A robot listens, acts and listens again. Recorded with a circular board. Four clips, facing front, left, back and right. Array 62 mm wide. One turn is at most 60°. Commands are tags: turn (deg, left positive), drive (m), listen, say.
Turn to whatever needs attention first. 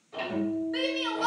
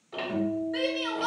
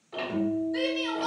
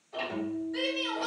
<turn deg="35"/>
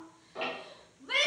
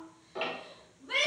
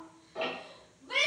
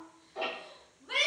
<say>Facing the shout, 1 to 2 m away.</say>